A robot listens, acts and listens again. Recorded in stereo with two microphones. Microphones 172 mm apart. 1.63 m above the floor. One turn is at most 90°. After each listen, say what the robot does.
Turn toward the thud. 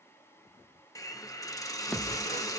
Turn 30° left.
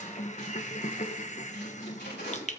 Keep listening.
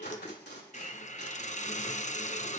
I heard a thud, but can't make it out now. It was about 25° right or 145° left.